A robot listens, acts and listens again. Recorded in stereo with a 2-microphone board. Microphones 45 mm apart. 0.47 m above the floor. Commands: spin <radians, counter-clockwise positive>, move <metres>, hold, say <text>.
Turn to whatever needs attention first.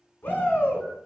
spin 0.96
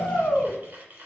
spin 0.96
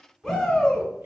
say Found it: a shout, straight ahead, 1 to 2 m away.